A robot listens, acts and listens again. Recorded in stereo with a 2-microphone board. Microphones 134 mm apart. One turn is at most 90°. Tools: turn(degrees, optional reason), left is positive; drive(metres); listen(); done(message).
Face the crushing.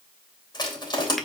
turn(degrees=30, reason="The crushing: about 30° left or 150° left.")
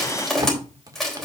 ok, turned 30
done("Facing the crushing, 2 to 4 m away.")